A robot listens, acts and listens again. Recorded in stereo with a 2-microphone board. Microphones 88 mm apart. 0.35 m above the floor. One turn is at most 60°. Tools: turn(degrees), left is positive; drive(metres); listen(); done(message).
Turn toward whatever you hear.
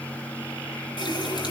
turn(degrees=55)
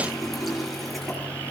done("Facing the running tap, over 4 m away.")